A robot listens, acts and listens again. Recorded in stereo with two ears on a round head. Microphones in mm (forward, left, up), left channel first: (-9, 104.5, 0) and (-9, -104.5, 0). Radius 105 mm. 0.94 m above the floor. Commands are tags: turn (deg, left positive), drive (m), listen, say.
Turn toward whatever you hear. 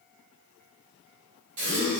<turn deg="-90"/>
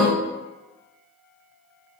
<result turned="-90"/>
<say>Facing the gasp, 1 to 2 m away.</say>